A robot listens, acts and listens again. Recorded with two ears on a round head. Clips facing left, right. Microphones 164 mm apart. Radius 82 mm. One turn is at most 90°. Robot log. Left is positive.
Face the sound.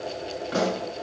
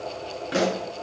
note: The pop: about 30° right or 150° right.
cmd yaw -30
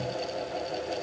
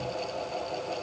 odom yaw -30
cmd idle
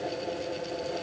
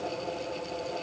end: I heard a pop, but can't make it out now. It was about straight ahead or 120° right.